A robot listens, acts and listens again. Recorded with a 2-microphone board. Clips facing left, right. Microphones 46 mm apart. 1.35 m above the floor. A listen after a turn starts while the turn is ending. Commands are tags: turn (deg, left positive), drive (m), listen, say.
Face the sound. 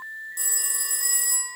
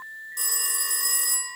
<turn deg="-60"/>
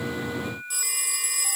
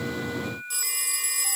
<say>Facing the phone ringing.</say>